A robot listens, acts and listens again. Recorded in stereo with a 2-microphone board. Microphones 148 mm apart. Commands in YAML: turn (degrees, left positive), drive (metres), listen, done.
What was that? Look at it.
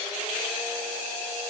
listen: true
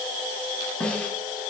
turn: 30
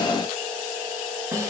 turn: -25
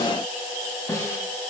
turn: 20
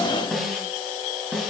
done: "Found it: a snare drum, straight ahead."